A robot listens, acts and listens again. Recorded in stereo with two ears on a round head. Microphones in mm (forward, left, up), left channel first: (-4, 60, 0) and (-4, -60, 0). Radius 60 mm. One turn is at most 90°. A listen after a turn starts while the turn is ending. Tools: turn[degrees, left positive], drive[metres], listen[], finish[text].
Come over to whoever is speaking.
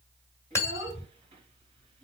Thought: The child speaking: about 40° right or 140° right.
Action: turn[-40]
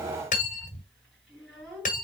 Action: drive[1.0]
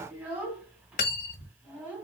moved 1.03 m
Thought: The child speaking is now 10° right.
Action: turn[-10]
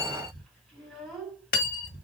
Action: drive[1.0]
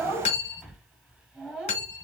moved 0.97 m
Action: drive[1.0]
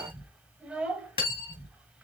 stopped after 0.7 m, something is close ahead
Thought: The child speaking is now 10° right.
Action: turn[-10]
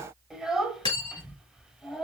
Action: finish[Arrived at the child speaking, straight ahead.]